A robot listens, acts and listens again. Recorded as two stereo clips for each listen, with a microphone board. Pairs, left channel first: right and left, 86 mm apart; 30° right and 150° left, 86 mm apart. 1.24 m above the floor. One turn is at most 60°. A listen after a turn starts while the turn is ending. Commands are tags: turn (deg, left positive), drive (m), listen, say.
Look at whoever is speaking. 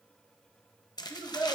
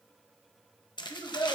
<turn deg="-15"/>
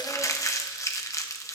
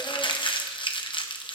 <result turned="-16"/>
<listen/>
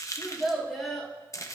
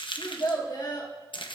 <say>Found it: a child speaking, straight ahead.</say>